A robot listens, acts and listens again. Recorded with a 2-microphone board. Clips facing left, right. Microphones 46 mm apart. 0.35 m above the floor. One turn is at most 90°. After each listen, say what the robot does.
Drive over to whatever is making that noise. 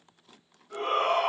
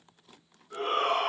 Turn 55° left.
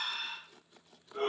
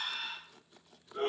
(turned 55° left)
Turn 55° left.
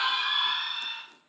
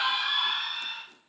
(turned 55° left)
Drive 1.0 m forward.
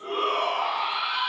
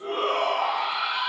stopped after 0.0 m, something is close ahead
Blocked. The shout is further on, straight ahead.